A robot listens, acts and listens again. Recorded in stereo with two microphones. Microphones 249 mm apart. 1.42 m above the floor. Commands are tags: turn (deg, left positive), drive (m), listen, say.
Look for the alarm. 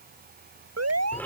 <turn deg="-90"/>
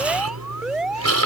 <say>Found it: an alarm, straight ahead.</say>